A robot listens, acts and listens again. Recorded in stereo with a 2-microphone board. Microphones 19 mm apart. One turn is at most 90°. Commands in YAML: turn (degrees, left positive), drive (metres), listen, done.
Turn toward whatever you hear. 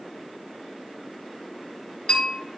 turn: 90
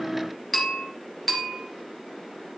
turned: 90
done: "Found it: a bell, straight ahead."